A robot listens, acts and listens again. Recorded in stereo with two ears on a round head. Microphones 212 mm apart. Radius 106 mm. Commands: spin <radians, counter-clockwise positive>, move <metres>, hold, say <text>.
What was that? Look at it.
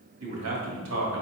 spin -0.96
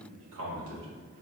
spin -1.13
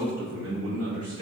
spin -1.22
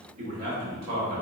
spin -0.79
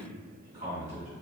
spin -0.35
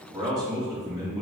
say Facing the man speaking.